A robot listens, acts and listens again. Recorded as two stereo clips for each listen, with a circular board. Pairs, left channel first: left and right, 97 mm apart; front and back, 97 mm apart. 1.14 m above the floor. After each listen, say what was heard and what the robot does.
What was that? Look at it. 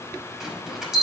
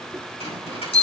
Facing the bell, over 4 m away.